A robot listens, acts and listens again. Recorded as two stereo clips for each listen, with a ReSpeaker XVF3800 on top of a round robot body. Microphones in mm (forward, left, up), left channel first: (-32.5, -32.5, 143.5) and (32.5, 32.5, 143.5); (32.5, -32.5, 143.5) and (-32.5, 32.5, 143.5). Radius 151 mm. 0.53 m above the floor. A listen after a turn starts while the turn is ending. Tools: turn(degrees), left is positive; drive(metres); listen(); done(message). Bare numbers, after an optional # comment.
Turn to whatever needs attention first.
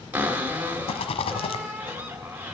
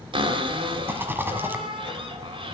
listen()
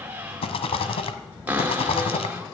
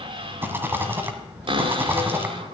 listen()
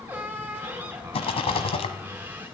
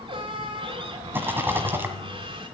done("I can't make out anything urgent, only a rattle and a cupboard door.")